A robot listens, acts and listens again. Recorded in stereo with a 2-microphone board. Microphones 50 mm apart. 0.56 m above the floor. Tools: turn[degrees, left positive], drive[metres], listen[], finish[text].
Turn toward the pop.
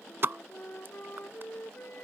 Thought: The pop: about 45° right or 135° right.
Action: turn[-45]
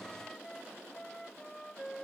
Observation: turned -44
Action: listen[]
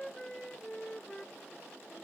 Action: finish[I heard a pop, but can't make it out now. It was about straight ahead or 90° right.]